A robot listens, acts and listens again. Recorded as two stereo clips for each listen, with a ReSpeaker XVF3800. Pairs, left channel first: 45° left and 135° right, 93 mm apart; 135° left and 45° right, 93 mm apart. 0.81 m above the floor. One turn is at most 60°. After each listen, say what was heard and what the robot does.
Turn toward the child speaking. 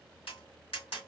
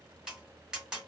Keep listening.
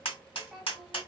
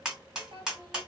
The child speaking: 50° right. Turn 50° right.
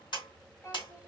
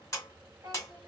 The child speaking is now 10° right. Turn 10° right.
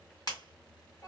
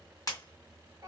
Facing the child speaking, 1 to 2 m away.